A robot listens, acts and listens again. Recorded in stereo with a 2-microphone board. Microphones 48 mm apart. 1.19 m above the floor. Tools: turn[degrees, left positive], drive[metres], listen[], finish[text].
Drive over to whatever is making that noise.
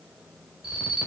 Action: turn[-30]
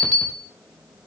Thought: So it is at 15° left.
Action: turn[15]
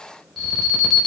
Action: drive[1.0]
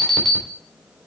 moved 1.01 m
Action: drive[1.0]
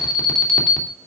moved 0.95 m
Action: drive[1.0]
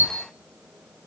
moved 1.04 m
Action: listen[]
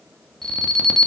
Action: drive[1.0]
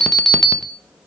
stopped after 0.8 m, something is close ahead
Action: finish[I am next to the alarm.]